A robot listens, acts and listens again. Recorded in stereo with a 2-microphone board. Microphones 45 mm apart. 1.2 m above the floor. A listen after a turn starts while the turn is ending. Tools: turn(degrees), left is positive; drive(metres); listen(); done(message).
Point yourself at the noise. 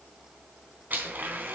turn(degrees=-40)
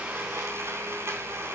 turn(degrees=-100)
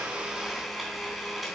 done("Facing the blender, 2 to 4 m away.")